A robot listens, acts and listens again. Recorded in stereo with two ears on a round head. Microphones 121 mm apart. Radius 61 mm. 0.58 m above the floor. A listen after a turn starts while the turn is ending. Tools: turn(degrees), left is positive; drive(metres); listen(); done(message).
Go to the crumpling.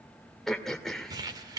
turn(degrees=-30)
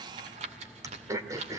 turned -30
turn(degrees=-115)
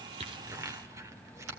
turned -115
turn(degrees=-25)
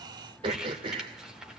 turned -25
drive(metres=1.0)
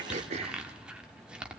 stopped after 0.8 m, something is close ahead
turn(degrees=-10)
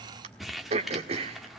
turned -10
done("Arrived at the crumpling, straight ahead.")